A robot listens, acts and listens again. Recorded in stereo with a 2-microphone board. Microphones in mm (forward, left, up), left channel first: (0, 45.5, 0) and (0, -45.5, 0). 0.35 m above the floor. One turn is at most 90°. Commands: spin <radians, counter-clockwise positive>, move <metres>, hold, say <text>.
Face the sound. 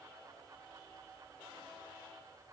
hold
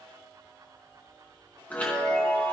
spin 0.35
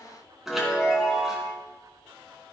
say Found it: a chime, straight ahead, 2 to 4 m away.